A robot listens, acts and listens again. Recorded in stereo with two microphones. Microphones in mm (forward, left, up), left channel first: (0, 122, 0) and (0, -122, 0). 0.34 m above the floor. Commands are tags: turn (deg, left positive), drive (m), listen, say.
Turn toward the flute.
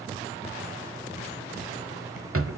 <listen/>
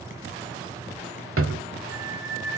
<turn deg="-35"/>
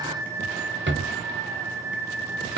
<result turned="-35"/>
<turn deg="-110"/>
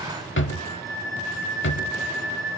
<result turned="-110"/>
<turn deg="15"/>
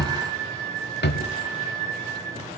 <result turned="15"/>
<say>Facing the flute.</say>